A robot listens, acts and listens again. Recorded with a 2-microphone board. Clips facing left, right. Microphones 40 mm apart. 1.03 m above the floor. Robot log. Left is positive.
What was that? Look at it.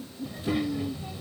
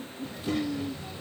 cmd yaw +30
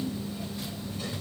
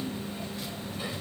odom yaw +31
note: So it is at 20° right.
cmd yaw -20
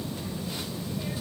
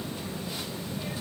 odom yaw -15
end: Found it: a child speaking, straight ahead.